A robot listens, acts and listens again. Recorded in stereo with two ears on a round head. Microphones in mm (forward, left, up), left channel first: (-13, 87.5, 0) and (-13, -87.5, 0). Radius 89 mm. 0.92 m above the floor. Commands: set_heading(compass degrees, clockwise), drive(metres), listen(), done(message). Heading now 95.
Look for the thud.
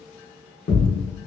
set_heading(35)
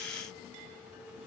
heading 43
listen()
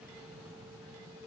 done("I heard a thud, but can't make it out now. It was about 5° left or 70° left.")